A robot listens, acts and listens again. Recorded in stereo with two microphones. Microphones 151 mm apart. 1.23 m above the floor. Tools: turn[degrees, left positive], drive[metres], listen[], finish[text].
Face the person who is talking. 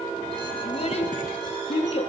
Thought: The child speaking: about 45° left or 135° left.
Action: turn[45]
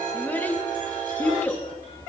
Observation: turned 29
Thought: So it is at 10° left.
Action: turn[10]
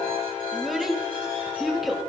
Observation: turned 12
Action: finish[Facing the child speaking, 1 to 2 m away.]